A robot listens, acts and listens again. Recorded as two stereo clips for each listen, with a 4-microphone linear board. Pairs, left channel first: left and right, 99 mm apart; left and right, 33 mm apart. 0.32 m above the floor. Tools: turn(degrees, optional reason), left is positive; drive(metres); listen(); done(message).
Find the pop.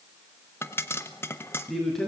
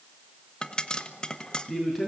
turn(degrees=20, reason="The pop: about 20° left or 160° left.")
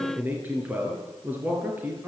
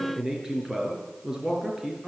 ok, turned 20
listen()
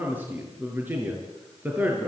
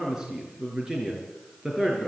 done("I heard a pop, but can't make it out now. It was about straight ahead or 140° left.")